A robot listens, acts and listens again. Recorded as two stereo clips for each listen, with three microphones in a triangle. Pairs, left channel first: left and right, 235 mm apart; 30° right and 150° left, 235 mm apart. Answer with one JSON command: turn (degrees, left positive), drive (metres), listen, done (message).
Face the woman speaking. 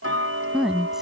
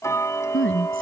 {"done": "Found it: a woman speaking, straight ahead."}